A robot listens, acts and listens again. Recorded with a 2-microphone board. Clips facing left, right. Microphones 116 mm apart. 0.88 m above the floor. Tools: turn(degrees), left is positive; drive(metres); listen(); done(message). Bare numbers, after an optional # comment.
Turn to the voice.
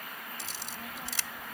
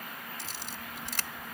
# The child speaking: about 35° left or 145° left.
turn(35)
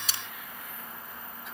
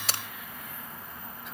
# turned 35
done("Facing the child speaking.")